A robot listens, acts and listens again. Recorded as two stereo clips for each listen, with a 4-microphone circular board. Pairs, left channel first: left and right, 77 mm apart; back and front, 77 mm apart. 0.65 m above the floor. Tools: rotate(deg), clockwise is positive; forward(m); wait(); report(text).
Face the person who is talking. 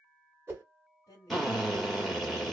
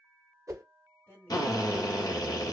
rotate(-130)
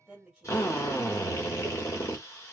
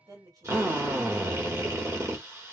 report("Found it: a woman speaking, straight ahead.")